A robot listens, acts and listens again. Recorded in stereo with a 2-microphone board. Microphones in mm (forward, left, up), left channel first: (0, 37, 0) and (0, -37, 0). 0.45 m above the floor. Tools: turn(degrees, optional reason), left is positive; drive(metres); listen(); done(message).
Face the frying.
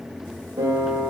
listen()
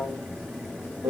listen()
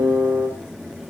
done("I can't make out frying to turn to.")